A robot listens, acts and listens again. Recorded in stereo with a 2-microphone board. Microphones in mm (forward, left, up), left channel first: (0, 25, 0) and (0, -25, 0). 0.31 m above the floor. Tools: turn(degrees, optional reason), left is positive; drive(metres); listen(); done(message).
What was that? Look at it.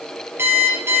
turn(degrees=-55, reason="The alarm clock: about 55° right or 125° right.")
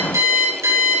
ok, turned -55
turn(degrees=-70, reason="So it is at 70° right.")
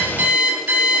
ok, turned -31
turn(degrees=-40, reason="The alarm clock is now 40° right.")
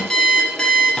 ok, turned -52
turn(degrees=15, reason="The alarm clock is now 15° left.")
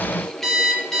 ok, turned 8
done("Facing the alarm clock, over 4 m away.")